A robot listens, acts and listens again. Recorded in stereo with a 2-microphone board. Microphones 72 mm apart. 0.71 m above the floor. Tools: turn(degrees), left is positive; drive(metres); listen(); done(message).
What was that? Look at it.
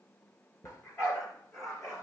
turn(degrees=40)
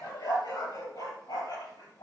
turn(degrees=105)
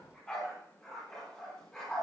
done("Facing the dog barking.")